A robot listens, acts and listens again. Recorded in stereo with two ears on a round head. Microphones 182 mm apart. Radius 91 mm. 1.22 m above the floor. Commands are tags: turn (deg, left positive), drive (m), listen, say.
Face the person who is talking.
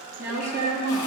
<turn deg="-15"/>
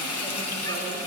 <listen/>
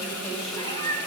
<listen/>
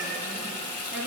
<say>I heard a woman speaking, but can't make it out now. It was about straight ahead or 150° right.</say>